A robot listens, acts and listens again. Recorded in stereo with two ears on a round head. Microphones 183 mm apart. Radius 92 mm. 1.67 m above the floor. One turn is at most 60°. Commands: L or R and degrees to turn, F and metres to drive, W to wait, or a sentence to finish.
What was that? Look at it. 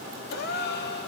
L55
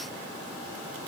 W
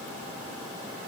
I heard a gasp, but can't make it out now. It was about straight ahead or 70° left.